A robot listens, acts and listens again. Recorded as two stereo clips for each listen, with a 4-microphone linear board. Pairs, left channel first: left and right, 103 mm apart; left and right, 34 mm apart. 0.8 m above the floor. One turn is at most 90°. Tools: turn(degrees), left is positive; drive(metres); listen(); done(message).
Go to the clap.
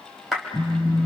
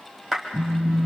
turn(degrees=30)
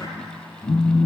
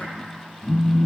listen()
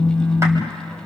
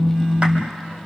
listen()
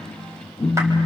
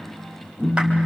done("I heard a clap, but can't make it out now. It was about 30° right or 150° left. I did not reach it.")